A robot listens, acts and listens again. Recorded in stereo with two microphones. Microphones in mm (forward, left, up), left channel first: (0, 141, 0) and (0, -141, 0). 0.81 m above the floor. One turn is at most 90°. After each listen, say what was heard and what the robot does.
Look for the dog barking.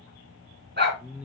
The dog barking: about 40° right or 140° right. Turn 40° right.
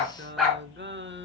Found it: a dog barking, straight ahead.